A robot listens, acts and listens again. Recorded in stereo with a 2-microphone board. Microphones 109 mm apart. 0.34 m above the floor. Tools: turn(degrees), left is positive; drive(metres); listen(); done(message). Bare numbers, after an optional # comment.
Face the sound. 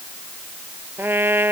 # The trumpet: about 20° right or 160° right.
turn(-20)
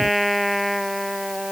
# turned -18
done("Found it: a trumpet, straight ahead.")